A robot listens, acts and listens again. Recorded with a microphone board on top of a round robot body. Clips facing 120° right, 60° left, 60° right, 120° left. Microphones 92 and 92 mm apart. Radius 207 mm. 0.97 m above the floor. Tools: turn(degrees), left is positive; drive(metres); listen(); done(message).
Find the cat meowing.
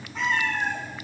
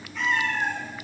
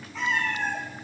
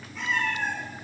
turn(degrees=-55)
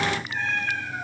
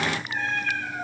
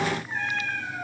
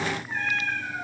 turn(degrees=15)
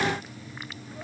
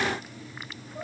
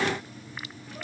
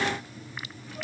listen()
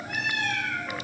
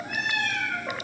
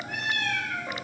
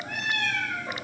turn(degrees=25)
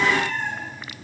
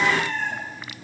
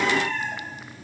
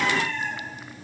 done("Facing the cat meowing.")